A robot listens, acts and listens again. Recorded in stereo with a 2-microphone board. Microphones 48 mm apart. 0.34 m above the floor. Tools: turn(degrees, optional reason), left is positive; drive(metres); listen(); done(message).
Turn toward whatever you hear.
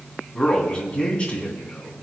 turn(degrees=30, reason="The man speaking: about 30° left or 150° left.")
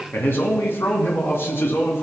turn(degrees=110, reason="So it is at 110° left.")
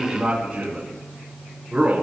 turn(degrees=-35, reason="The man speaking is now 35° right.")
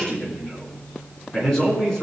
turn(degrees=15, reason="The man speaking is now 15° left.")
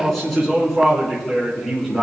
done("Found it: a man speaking, straight ahead, 2 to 4 m away.")